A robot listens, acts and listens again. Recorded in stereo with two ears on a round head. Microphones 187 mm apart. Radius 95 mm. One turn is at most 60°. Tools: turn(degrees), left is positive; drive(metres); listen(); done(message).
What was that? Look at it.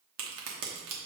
turn(degrees=-60)
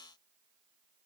listen()
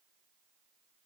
done("I heard a crack, but can't make it out now. It was about 15° right or 45° right.")